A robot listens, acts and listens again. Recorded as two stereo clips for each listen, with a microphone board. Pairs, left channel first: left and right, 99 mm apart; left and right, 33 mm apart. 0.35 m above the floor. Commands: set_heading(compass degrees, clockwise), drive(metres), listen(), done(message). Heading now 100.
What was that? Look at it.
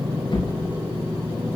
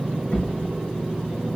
set_heading(45)
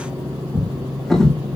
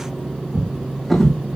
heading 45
done("Facing the drawer, over 4 m away.")